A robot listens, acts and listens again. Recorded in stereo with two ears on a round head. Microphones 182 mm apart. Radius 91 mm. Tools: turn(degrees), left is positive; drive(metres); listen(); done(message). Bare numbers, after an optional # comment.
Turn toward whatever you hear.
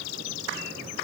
listen()
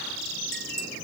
listen()
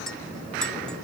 turn(30)
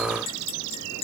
# So it is at 150° left.
turn(150)
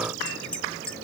done("Facing the clink.")